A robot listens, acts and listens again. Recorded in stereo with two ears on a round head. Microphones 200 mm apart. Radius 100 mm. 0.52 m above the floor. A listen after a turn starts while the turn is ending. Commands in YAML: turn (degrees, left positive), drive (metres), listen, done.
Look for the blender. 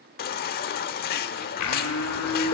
turn: 90
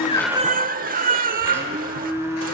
turn: -10
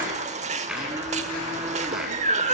done: "Found it: a blender, straight ahead, 2 to 4 m away."